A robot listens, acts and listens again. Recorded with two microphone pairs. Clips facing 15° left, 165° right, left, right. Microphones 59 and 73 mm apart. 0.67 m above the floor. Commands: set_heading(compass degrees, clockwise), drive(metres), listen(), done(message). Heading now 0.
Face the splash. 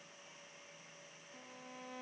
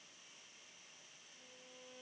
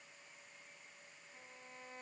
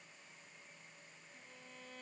listen()
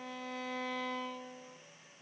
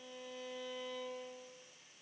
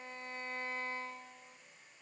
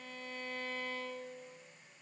listen()
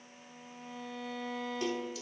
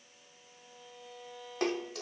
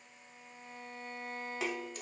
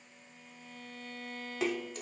set_heading(185)
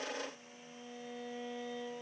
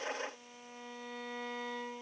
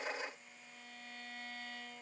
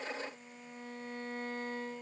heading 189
done("I heard a splash from this way, but can't make it out now.")